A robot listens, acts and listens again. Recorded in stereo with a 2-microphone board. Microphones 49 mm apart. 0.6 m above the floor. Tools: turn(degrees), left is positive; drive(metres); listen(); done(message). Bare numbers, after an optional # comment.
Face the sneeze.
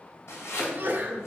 # The sneeze: about 45° right or 135° right.
turn(-45)
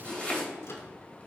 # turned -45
listen()
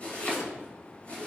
done("I heard a sneeze, but can't make it out now. It was about straight ahead or 90° right.")